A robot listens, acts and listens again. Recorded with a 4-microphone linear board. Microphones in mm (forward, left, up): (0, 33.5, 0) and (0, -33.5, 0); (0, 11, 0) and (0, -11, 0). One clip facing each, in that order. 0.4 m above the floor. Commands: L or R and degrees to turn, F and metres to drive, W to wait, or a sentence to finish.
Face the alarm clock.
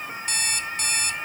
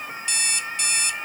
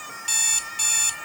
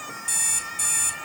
L40
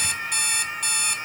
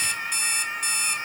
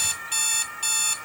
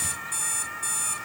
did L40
L90
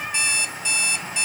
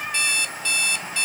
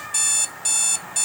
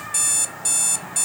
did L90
L25
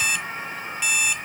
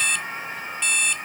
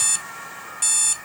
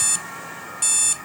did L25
Facing the alarm clock.